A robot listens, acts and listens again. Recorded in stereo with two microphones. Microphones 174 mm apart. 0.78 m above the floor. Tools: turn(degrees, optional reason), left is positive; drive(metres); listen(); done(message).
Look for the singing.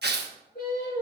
turn(degrees=60, reason="The singing: about 60° left or 120° left.")
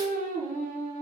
turn(degrees=50, reason="So it is at 50° left.")
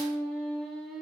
done("Facing the singing.")